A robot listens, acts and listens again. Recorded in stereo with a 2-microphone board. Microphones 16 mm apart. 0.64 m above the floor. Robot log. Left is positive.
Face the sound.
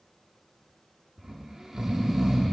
note: The snoring: about 30° right or 150° right.
cmd yaw -30
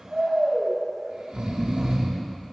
note: So it is at 115° right.
cmd yaw -115
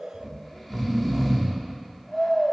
note: The snoring is now 10° right.
cmd yaw -10
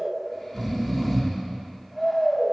end: Facing the snoring.